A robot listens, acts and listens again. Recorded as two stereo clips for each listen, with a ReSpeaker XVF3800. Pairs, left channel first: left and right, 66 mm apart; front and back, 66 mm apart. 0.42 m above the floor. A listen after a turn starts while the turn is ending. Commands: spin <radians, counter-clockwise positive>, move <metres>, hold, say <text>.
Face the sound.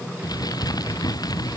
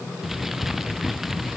spin 1.66
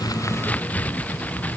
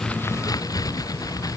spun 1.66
spin 0.44
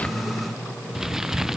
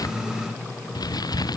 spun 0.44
say Facing the crumpling.